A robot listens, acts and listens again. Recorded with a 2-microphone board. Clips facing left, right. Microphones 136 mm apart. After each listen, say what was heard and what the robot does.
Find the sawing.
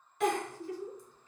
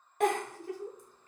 Keep listening.
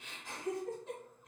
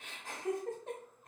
Keep listening.
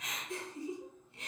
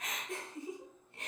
I can't make out sawing, only a giggle.